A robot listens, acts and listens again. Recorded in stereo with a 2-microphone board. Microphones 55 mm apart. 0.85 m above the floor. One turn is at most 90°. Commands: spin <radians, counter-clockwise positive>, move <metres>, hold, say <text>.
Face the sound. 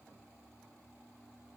hold
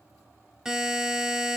spin -0.52
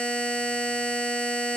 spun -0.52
spin 0.35
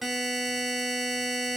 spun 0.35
say Found it: a buzzer, straight ahead, 1 to 2 m away.